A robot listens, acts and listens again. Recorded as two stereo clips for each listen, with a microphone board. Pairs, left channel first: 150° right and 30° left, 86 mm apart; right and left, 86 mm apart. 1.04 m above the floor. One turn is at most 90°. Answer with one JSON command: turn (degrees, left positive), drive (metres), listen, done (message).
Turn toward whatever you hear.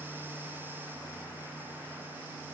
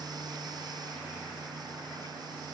{"listen": true}
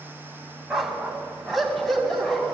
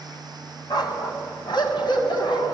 {"turn": -65}
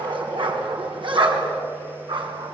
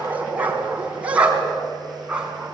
{"turn": 10}
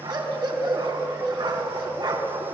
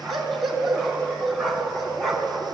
{"done": "Found it: a dog barking, straight ahead, 2 to 4 m away."}